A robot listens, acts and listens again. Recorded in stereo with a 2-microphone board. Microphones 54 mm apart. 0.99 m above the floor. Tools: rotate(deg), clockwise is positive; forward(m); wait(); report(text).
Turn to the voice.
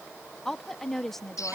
rotate(-30)
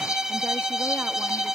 wait()
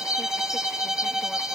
wait()
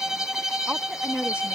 rotate(25)
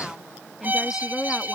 report("Found it: a woman speaking, straight ahead.")